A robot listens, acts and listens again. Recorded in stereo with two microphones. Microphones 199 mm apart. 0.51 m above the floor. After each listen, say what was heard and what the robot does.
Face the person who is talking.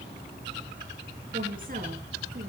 The woman speaking: about 45° right or 135° right. Turn 45° right.
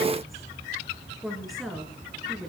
Found it: a woman speaking, straight ahead, over 4 m away.